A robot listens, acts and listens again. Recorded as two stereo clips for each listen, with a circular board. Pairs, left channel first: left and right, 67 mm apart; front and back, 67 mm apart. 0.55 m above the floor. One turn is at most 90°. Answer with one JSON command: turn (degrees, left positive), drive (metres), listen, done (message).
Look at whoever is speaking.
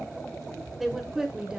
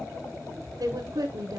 {"turn": -90}
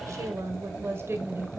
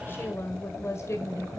{"turn": -35}
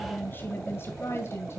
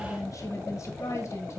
{"turn": 40}
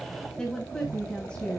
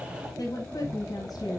{"turn": 15}
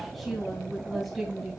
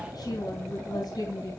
{"done": "Facing the woman speaking."}